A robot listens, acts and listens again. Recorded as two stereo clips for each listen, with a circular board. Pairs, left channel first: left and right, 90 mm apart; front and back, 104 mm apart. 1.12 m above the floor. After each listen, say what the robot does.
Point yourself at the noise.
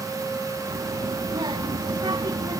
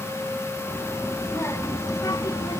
Turn 50° right.
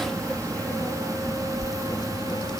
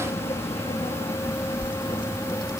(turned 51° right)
Turn 50° left.
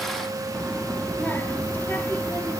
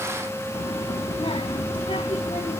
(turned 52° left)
Turn 20° left.
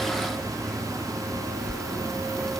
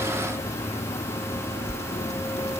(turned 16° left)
Found it: a child speaking, straight ahead.